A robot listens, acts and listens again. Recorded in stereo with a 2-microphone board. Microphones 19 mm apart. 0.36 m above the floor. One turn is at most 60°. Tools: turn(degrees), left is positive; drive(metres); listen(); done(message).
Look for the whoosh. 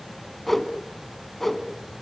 turn(degrees=30)
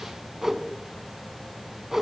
turn(degrees=-20)
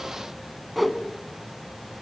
done("Facing the whoosh.")